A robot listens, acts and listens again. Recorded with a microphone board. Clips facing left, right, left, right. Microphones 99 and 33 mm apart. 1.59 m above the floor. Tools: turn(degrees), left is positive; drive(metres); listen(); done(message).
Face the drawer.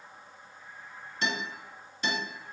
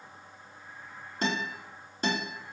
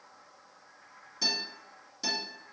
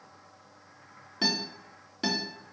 listen()
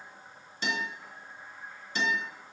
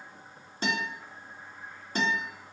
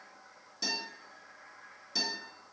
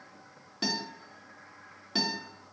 listen()
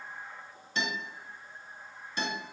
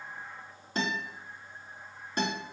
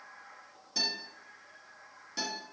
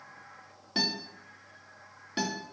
done("I can't make out a drawer to turn to.")